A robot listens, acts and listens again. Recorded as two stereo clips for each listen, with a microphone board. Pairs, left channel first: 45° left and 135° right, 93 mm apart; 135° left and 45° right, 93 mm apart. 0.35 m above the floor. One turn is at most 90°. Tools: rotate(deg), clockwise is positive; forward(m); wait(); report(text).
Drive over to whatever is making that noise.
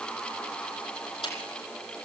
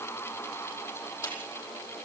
rotate(-75)
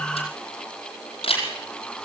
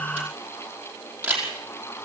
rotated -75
rotate(-30)
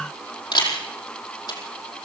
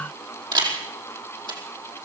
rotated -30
forward(1.0)
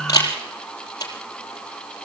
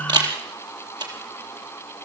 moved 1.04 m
forward(1.0)
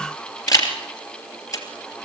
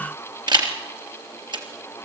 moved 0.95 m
forward(1.0)
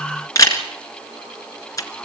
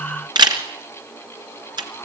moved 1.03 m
forward(1.0)
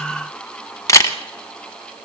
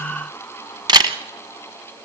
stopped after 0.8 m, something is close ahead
rotate(10)
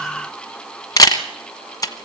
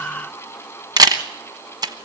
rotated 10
report("Arrived at the camera shutter, straight ahead.")